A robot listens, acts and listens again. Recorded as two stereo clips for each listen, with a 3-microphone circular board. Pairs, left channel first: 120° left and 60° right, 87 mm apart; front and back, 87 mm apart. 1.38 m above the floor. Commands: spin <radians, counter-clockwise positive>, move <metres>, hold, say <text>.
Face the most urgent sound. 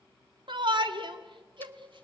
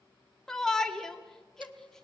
spin -1.48
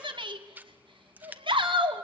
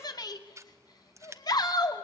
spin -0.70
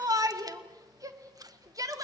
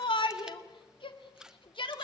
spin -0.17
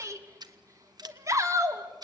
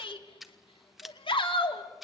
say Found it: a shout, straight ahead, 2 to 4 m away.